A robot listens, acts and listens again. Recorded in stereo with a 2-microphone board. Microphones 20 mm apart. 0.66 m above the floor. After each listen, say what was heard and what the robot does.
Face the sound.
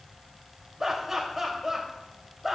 Turn 30° right.
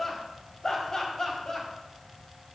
So it is at 30° left. Turn 30° left.
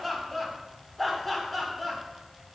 The laughter is now 10° left. Turn 10° left.
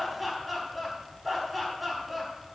Found it: laughter, straight ahead, over 4 m away.